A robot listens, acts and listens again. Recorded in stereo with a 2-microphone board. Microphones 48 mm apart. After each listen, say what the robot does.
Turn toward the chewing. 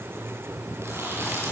Turn 70° right.
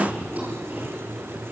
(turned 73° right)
Turn 35° right.
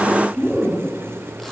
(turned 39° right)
Found it: chewing, straight ahead, over 4 m away.